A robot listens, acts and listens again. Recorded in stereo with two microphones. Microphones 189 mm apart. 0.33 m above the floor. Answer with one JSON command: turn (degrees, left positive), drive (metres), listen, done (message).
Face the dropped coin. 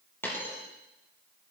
{"turn": 30}
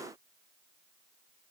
{"listen": true}
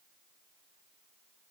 {"done": "I heard a dropped coin, but can't make it out now. It was about 20° right or 140° left."}